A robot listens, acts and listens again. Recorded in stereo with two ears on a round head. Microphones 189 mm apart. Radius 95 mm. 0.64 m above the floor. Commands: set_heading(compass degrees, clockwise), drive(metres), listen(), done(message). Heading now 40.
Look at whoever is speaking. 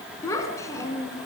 set_heading(25)
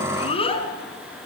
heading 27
set_heading(237)
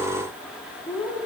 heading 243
set_heading(233)
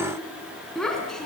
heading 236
done("Found it: a child speaking, straight ahead, 2 to 4 m away.")